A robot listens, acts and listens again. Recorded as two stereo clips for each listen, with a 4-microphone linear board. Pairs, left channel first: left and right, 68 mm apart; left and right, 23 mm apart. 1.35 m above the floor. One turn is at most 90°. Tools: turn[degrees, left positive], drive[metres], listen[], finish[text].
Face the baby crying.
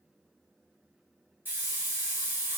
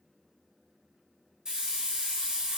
Action: listen[]
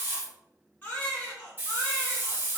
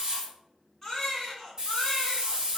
Thought: The baby crying: about 25° left or 155° left.
Action: turn[25]
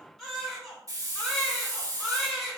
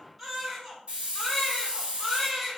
Action: finish[Found it: a baby crying, straight ahead.]